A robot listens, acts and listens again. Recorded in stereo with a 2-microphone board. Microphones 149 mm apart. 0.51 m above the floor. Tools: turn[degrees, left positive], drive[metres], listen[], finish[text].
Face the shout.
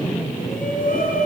Thought: The shout: about 65° left or 115° left.
Action: turn[65]
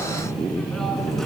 Action: listen[]
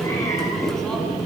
Action: listen[]
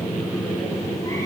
Action: finish[I heard a shout, but can't make it out now. It was about straight ahead or 50° left.]